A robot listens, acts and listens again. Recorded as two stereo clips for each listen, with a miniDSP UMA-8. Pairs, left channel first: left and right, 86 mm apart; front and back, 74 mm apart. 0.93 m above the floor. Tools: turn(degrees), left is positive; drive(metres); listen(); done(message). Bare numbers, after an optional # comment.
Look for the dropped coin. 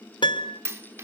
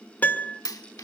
# The dropped coin: 30° right.
turn(-30)
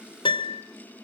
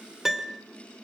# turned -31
done("I heard a dropped coin from this way, but can't make it out now.")